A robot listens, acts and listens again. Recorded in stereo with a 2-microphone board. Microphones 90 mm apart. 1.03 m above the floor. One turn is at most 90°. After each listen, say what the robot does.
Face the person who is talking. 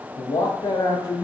Turn 50° left.
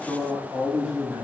Turn 20° right.
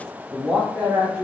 Turn 10° right.
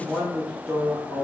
Turn 15° right.
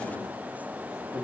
Turn 10° right.
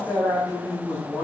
Found it: a man speaking, straight ahead, 2 to 4 m away.